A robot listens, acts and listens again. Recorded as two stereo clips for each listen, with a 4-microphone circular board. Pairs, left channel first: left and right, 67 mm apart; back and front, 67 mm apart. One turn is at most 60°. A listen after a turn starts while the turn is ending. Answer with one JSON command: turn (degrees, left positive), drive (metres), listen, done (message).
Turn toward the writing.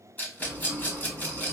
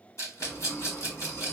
{"turn": -60}
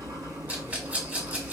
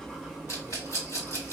{"turn": -60}
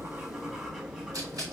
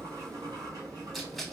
{"turn": -10}
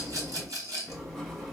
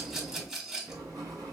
{"done": "Found it: writing, straight ahead, 1 to 2 m away."}